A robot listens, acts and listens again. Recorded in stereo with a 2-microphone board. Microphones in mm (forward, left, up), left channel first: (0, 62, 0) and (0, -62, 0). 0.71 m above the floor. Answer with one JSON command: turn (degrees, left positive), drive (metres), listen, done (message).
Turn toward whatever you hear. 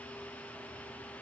{"listen": true}
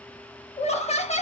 {"turn": 60}
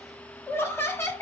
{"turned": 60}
{"turn": 25}
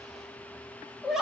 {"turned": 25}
{"done": "Facing the laughter."}